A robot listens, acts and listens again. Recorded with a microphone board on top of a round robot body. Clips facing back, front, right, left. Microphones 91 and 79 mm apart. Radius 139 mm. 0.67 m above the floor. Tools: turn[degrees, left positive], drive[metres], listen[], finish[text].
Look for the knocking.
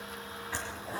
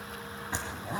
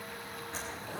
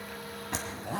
Action: listen[]
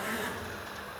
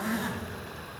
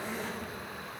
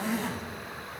Action: listen[]
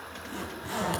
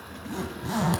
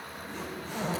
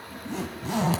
Action: finish[I can't make out knocking to turn to.]